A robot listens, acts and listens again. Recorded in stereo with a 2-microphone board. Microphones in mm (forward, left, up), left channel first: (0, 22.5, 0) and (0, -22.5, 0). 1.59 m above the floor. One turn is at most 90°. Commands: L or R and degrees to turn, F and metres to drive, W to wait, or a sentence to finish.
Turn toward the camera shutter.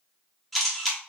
L30
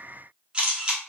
R25
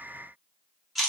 Facing the camera shutter.